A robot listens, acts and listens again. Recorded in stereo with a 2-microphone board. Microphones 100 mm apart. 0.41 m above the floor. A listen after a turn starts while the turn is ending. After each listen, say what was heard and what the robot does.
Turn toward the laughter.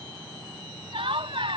The laughter: about 60° right or 120° right. Turn 60° right.
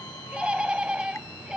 So it is at 10° right. Turn 10° right.
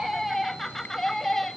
Facing the laughter.